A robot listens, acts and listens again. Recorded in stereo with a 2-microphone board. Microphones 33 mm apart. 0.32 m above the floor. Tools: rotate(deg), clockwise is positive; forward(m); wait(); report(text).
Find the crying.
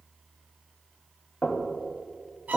wait()
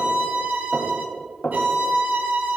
wait()
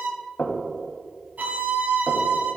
report("I can't make out crying to turn to.")